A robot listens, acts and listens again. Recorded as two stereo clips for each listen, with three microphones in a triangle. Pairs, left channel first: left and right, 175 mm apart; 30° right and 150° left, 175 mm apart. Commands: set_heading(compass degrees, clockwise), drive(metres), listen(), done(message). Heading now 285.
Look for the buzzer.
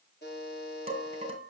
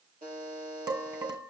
set_heading(175)
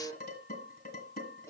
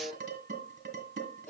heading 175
set_heading(160)
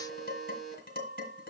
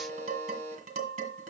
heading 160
done("Found it: a buzzer, straight ahead.")